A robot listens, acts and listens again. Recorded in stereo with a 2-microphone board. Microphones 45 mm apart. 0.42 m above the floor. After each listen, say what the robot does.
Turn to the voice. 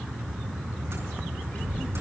Turn 45° left.
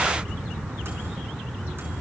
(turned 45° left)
Turn 90° left.
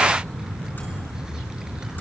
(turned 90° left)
Keep listening.
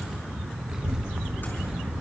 Turn 15° right.
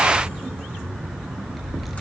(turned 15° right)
Facing the child speaking, over 4 m away.